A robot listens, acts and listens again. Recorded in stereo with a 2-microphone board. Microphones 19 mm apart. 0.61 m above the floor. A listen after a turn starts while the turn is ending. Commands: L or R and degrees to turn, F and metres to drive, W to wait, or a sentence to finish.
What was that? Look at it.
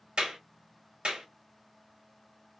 R45
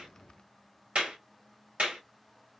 R90
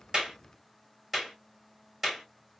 R20
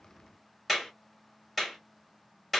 Facing the clap.